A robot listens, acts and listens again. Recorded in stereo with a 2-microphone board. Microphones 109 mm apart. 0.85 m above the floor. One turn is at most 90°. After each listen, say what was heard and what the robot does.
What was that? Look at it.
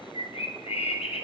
The bird: about 60° left or 120° left. Turn 60° left.
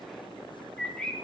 Found it: a bird, straight ahead.